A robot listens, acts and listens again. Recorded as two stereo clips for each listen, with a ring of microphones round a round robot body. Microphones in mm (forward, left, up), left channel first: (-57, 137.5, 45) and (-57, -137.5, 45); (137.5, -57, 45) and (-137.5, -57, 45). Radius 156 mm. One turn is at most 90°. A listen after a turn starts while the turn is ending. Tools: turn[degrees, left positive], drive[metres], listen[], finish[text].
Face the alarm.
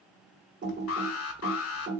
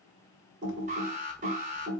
Thought: The alarm: 115° left.
Action: turn[90]
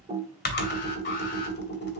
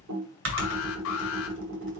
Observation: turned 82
Thought: Nothing new. It was at 35° left.
Action: turn[35]
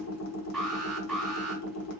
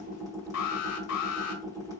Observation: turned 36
Action: finish[Facing the alarm, 1 to 2 m away.]